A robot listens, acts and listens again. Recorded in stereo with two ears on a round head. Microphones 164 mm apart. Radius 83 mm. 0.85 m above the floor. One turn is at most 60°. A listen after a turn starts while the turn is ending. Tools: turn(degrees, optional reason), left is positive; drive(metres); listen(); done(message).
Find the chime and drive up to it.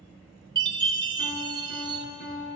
turn(degrees=-25, reason="The chime: about 25° right or 155° right.")
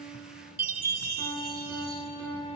turn(degrees=-60, reason="So it is at 130° right.")
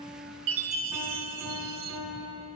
turn(degrees=-60, reason="The chime is now 85° right.")
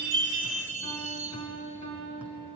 turn(degrees=-40, reason="The chime is now 40° right.")
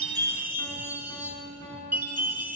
turn(degrees=-10, reason="The chime is now 10° right.")
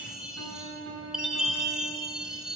drive(metres=1.0)
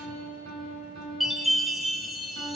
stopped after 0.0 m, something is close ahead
done("Blocked. The chime is further on, straight ahead.")